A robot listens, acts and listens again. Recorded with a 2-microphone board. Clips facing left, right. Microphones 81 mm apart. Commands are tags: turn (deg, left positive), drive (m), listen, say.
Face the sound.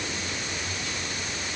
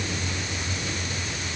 <listen/>
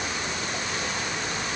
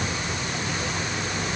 <listen/>
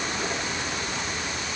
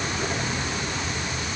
<say>I can't make out anything to turn to.</say>